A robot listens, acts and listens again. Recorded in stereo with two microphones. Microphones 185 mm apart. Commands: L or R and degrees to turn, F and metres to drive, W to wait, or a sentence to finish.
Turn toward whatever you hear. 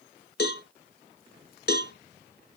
L65
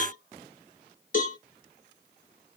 L50
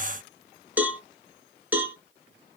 R10
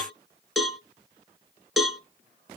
Facing the cowbell, 1 to 2 m away.